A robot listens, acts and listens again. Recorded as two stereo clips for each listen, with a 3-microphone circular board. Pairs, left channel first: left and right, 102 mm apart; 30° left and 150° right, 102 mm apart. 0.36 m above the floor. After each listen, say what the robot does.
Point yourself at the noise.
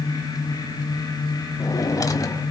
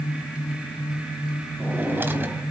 Turn 140° left.
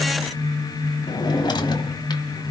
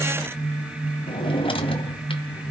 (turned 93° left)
Turn 50° left.
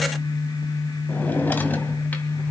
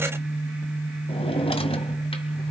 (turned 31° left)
Turn 20° left.
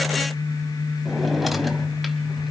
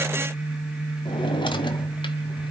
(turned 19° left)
Facing the drawer, 1 to 2 m away.